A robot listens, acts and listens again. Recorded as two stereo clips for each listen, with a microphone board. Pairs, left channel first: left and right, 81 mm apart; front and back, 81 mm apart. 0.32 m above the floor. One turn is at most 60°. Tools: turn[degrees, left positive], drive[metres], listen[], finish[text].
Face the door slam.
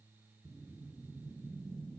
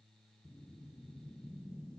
Action: listen[]
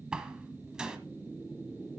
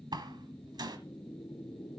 Thought: The door slam: 170° right.
Action: turn[-60]
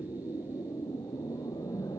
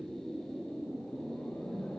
Thought: Nothing new. It was at 110° right.
Action: turn[-60]
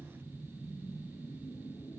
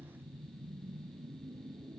Thought: Nothing new. It was at 50° right.
Action: turn[-50]
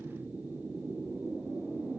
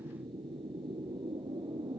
Action: finish[I heard a door slam from this way, but can't make it out now.]